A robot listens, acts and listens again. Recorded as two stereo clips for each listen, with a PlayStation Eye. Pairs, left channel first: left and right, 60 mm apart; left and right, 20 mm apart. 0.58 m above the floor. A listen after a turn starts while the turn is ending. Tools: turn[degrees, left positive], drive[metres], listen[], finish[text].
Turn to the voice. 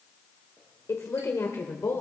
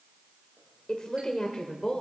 Thought: The woman speaking: about 60° left or 120° left.
Action: turn[60]
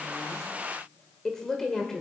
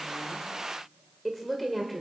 Thought: So it is at 10° left.
Action: turn[10]
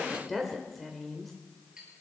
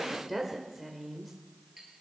Action: finish[Found it: a woman speaking, straight ahead, 1 to 2 m away.]